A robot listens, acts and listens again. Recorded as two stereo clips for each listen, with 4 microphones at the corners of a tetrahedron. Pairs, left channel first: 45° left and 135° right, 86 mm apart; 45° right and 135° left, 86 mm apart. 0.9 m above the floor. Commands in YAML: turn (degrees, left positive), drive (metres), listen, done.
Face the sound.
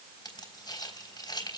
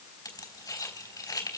done: "Found it: keys jangling, straight ahead, 2 to 4 m away."